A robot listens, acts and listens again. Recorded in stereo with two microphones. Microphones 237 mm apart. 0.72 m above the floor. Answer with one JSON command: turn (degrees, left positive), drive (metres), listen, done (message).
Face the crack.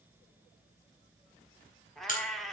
{"turn": 35}
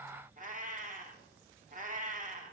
{"listen": true}
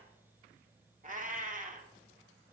{"done": "I heard a crack, but can't make it out now. It was about straight ahead or 110° left."}